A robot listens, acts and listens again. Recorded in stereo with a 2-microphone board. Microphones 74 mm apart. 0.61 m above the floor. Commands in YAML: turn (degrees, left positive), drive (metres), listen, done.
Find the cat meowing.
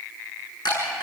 listen: true
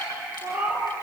turn: -25
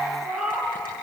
done: "Facing the cat meowing."